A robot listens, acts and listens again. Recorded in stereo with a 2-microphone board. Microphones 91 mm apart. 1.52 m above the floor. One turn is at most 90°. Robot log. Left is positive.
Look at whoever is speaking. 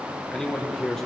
cmd yaw +30
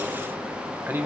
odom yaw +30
note: So it is at 25° right.
cmd yaw -25
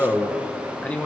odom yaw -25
note: The man speaking is now 15° left.
cmd yaw +15
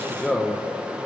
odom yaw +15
end: Found it: a man speaking, straight ahead.